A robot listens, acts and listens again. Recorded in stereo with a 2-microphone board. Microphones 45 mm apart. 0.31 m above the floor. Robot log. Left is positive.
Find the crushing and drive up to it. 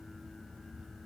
cmd idle
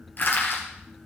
note: The crushing: about 55° left or 125° left.
cmd yaw +55
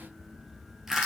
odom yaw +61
cmd fwd 1.0
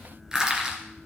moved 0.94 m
note: The crushing is now 15° right.
cmd yaw -15
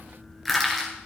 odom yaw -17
cmd fwd 1.0
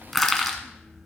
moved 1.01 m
cmd fwd 1.0
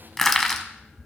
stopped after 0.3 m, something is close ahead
note: The crushing is now 10° left.
cmd yaw +10
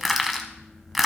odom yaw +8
end: I am next to the crushing.